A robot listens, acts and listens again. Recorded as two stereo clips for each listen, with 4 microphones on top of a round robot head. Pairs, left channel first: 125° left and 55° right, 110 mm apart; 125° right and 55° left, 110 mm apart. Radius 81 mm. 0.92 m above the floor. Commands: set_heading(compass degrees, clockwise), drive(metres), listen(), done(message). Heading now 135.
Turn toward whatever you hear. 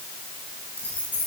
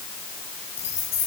set_heading(295)
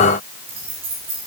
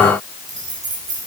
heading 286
set_heading(296)
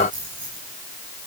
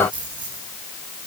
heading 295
done("Found it: keys jangling, straight ahead, over 4 m away.")